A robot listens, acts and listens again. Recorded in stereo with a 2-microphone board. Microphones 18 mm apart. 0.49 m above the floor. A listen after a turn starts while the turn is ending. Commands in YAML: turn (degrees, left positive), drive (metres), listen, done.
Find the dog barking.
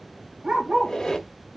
turn: -90
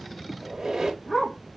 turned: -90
done: "Facing the dog barking, 1 to 2 m away."